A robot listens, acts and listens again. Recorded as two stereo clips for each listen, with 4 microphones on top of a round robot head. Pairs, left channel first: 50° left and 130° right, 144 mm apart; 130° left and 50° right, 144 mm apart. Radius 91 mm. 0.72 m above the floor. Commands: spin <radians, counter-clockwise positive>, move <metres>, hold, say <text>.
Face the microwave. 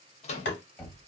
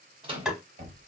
say Facing the microwave, under 1 m away.